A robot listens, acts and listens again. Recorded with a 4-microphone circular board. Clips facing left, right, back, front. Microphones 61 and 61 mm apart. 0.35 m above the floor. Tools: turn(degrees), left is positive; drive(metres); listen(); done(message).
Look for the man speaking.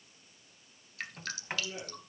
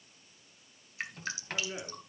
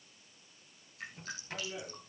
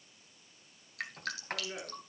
turn(degrees=-55)
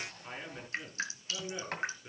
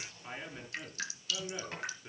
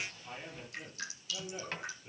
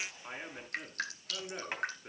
done("Facing the man speaking, over 4 m away.")